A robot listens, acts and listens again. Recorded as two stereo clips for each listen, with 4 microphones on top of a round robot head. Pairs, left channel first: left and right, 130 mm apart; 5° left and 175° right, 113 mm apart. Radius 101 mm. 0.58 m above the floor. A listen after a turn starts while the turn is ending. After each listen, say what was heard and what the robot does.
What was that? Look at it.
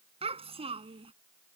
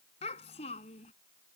The child speaking: 40° right. Turn 40° right.
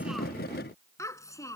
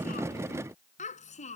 The child speaking is now 25° left. Turn 25° left.
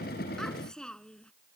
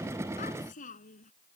Facing the child speaking.